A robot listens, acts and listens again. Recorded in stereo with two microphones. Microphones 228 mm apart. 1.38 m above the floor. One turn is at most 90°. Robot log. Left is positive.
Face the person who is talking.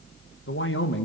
note: The man speaking: about 55° left or 125° left.
cmd yaw +55
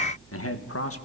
note: So it is at 80° left.
cmd yaw +80
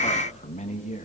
note: The man speaking is now 35° left.
cmd yaw +35
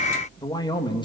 note: The man speaking is now 20° left.
cmd yaw +20
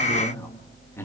note: The man speaking is now 10° left.
cmd yaw +10
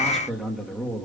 end: Facing the man speaking.